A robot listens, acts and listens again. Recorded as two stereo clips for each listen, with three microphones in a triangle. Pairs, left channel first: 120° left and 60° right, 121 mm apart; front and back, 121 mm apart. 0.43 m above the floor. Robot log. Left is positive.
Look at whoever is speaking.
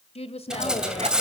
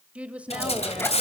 note: The woman speaking: 100° left.
cmd yaw +100
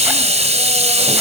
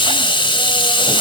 cmd idle
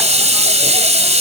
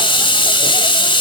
cmd idle
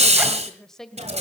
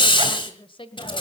note: The woman speaking is now 35° left.
cmd yaw +35
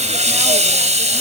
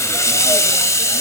cmd idle
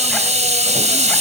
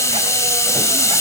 cmd idle
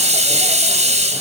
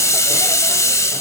end: I heard a woman speaking from this way, but can't make it out now.